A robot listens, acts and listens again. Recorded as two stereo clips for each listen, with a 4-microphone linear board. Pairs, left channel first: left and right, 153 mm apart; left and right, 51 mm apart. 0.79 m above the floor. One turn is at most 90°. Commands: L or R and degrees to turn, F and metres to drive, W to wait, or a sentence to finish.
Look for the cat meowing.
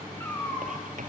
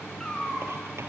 L30
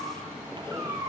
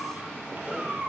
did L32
R20
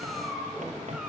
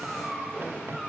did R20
Found it: a cat meowing, straight ahead, over 4 m away.